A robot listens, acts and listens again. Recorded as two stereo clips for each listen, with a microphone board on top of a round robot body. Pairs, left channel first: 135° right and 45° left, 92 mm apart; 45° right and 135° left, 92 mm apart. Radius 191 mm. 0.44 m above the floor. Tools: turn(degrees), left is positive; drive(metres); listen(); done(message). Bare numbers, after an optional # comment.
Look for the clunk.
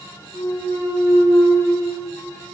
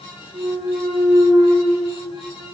# The clunk: 165° left.
turn(165)
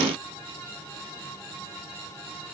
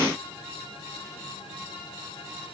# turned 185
# Nothing new. It was at 20° right.
turn(-20)
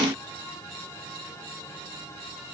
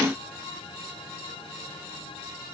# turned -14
done("Facing where the clunk came from. I can't hear it now.")